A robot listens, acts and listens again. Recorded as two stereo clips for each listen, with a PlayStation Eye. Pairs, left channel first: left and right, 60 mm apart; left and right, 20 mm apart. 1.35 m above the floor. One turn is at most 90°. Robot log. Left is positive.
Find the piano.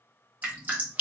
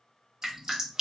cmd idle
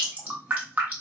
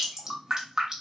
cmd idle
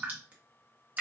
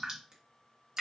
end: I can't make out a piano, only dripping.